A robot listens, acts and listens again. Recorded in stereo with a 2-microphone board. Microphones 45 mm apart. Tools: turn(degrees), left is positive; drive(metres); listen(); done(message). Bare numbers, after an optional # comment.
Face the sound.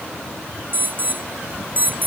# The alarm: about 40° right or 140° right.
turn(-40)
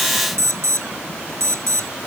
# So it is at 100° right.
turn(-100)
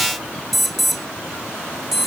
done("Facing the alarm.")